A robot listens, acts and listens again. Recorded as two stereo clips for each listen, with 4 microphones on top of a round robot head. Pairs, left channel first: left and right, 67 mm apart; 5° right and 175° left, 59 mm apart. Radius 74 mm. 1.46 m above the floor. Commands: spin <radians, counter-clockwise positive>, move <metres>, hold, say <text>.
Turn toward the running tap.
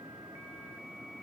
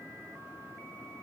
hold
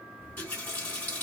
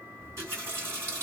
spin 2.53
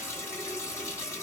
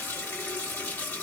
spin 0.79
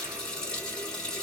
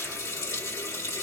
spin 0.17
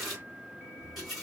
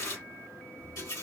say Found it: a running tap, straight ahead, 2 to 4 m away.